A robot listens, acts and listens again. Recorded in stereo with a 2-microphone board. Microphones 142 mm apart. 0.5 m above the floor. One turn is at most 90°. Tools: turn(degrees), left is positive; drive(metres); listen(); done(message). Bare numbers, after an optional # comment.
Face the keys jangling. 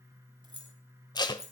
# The keys jangling: about 25° right or 155° right.
turn(-25)
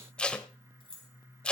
# The keys jangling: about 40° right or 140° right.
turn(-40)
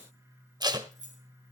# So it is at 115° right.
turn(-90)
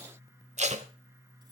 # The keys jangling is now 35° right.
turn(-35)
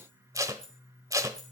done("Facing the keys jangling.")